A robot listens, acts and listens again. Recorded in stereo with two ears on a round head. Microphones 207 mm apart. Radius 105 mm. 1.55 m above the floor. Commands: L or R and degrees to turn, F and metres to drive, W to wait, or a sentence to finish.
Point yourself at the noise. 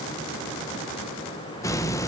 L30
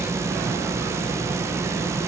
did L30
R15
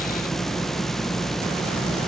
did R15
Found it: a hiss, straight ahead.